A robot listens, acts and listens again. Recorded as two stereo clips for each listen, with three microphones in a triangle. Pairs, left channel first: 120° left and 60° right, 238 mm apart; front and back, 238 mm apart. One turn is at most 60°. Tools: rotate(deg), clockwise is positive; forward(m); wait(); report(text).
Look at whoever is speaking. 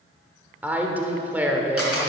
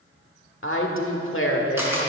rotate(-20)
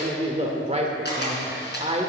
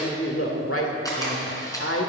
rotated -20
report("Facing the woman speaking, 1 to 2 m away.")